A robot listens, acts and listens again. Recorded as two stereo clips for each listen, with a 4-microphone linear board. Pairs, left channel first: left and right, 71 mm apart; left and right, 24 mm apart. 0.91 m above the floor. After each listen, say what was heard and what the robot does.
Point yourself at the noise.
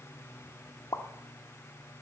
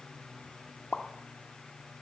The pop: about 60° left or 120° left. Turn 60° left.
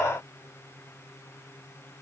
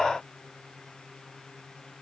Keep listening.
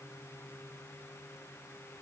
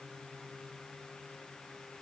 I heard a pop, but can't make it out now. It was about straight ahead or 60° left.